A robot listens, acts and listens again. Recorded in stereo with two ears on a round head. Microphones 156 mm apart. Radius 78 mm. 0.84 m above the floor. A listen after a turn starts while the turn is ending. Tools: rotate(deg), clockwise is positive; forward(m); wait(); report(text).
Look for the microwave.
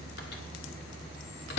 rotate(-60)
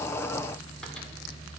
wait()
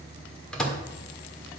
report("Facing the microwave.")